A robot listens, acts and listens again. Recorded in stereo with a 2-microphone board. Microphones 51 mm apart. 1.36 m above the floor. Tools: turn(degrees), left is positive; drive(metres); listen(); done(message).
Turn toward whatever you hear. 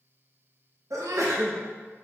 turn(degrees=-90)
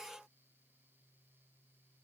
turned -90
done("Facing where the sneeze came from. I can't hear it now.")